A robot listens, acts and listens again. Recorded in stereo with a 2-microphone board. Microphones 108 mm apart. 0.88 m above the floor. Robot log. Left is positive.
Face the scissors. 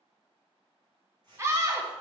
note: The scissors: about 50° right or 130° right.
cmd yaw -50
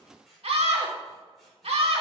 end: Found it: scissors, straight ahead.